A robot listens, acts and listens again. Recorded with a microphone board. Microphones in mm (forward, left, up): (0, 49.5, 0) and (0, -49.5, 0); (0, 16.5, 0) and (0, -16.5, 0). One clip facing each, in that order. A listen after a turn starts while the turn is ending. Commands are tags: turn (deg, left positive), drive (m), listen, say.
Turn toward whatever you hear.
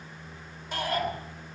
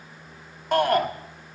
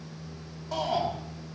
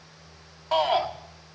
<turn deg="-60"/>
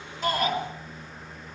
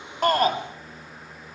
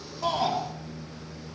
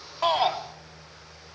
<turn deg="-50"/>
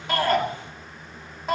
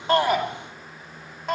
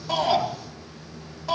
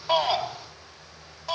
<say>Found it: a shout, straight ahead.</say>